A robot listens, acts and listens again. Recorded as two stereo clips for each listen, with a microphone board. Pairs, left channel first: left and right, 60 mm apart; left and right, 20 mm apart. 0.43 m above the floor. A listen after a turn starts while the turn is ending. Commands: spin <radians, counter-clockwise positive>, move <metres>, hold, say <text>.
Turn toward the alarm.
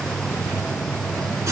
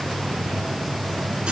hold
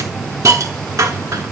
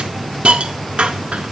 hold
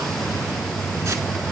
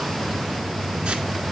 say I can't make out an alarm, only a hiss.